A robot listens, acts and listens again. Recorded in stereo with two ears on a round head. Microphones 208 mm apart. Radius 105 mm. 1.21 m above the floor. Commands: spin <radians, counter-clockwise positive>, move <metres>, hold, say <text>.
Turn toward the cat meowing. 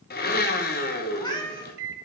spin 0.35
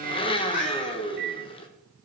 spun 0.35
spin 2.44
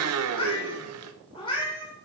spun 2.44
spin 0.35
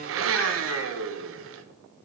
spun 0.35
hold
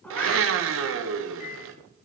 say Found it: a cat meowing, straight ahead, 2 to 4 m away.